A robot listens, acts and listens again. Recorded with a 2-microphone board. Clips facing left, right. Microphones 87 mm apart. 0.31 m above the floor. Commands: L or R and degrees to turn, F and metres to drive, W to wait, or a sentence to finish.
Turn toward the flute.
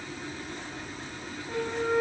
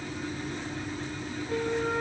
L30
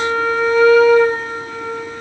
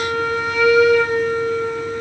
L150
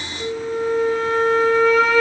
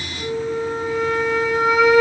Facing the flute, over 4 m away.